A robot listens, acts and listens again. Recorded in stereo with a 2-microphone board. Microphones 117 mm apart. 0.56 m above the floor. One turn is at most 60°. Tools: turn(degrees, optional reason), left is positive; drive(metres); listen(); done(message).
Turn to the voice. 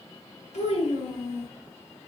turn(degrees=60, reason="The child speaking: about 70° left or 110° left.")
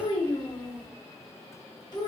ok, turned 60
turn(degrees=40, reason="So it is at 40° left.")
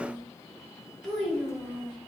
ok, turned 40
done("Facing the child speaking.")